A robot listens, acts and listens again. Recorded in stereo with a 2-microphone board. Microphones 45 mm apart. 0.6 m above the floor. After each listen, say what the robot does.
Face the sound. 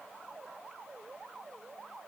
Keep listening.
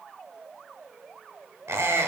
Turn 90° right.
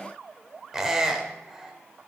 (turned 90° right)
Turn 10° right.
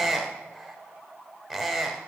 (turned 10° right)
Found it: a squeak, straight ahead, under 1 m away.